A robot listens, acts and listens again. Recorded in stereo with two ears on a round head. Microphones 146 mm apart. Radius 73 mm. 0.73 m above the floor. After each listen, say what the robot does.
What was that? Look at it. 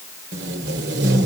Turn 90° right.
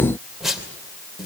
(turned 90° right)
Facing the tape being pulled.